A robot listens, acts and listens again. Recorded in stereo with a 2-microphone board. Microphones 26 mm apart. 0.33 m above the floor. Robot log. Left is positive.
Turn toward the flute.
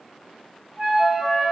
note: The flute: about 40° right or 140° right.
cmd yaw -40
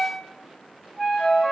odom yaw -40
note: So it is at 10° right.
cmd yaw -10
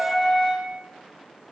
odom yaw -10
end: Facing the flute.